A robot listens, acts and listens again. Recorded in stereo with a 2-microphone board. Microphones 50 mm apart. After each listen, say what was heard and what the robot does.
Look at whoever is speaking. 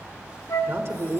The man speaking: about 50° right or 130° right. Turn 50° right.
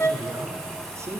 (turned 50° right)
So it is at 75° right. Turn 75° right.
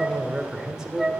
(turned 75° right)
The man speaking is now 15° right. Turn 15° right.
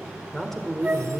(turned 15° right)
Facing the man speaking, 1 to 2 m away.